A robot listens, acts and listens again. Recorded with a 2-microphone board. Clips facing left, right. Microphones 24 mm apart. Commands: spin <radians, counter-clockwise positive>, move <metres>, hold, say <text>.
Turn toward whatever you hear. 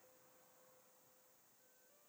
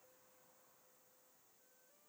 hold
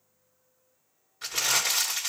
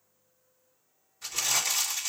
spin 1.13
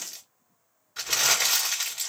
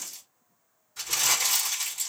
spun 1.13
spin 0.79
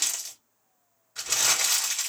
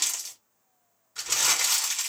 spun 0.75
say Facing the crumpling.